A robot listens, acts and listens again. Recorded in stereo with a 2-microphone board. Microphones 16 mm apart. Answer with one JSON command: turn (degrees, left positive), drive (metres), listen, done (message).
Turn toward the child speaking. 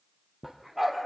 {"listen": true}
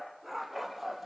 {"listen": true}
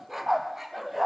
{"done": "I can't make out a child speaking to turn to."}